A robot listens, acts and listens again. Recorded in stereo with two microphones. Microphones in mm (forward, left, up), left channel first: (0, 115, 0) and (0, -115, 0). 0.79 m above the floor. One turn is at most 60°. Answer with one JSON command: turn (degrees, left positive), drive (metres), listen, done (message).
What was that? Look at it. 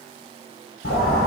{"turn": 60}
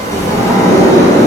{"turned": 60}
{"turn": 15}
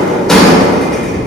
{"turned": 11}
{"done": "Facing the sliding door, 1 to 2 m away."}